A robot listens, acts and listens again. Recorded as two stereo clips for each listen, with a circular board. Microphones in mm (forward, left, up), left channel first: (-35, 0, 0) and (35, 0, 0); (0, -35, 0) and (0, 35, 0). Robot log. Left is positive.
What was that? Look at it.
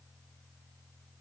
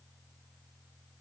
cmd idle
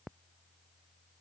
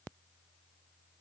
cmd idle
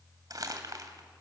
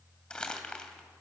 note: The crumpling: 15° right.
cmd yaw -15
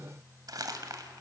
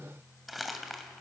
end: Found it: crumpling, straight ahead.